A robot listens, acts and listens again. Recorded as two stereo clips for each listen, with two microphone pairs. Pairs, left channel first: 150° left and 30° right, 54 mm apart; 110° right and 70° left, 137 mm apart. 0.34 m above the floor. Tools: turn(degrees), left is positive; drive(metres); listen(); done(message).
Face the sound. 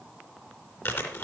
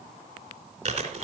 turn(degrees=110)
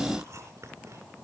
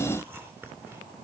done("Facing the chewing.")